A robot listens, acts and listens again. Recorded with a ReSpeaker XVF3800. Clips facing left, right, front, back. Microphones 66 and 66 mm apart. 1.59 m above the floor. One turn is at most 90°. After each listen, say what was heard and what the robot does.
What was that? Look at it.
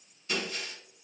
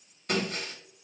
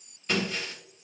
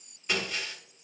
The breaking glass: 100° right. Turn 90° right.
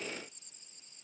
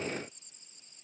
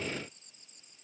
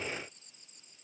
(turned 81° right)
Nothing new. It was at 20° right. Turn 20° right.
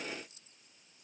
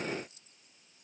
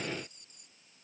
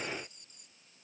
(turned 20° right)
I heard breaking glass from this way, but can't make it out now.